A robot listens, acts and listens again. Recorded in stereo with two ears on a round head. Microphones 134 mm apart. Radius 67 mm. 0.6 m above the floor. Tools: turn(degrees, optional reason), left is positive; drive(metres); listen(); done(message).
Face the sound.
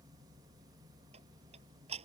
turn(degrees=-45, reason="The ticking: about 45° right or 135° right.")
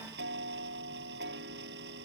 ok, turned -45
turn(degrees=-90, reason="So it is at 90° right.")
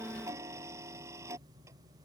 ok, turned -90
turn(degrees=-20, reason="The ticking is now 20° right.")
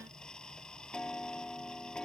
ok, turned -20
done("Facing the ticking.")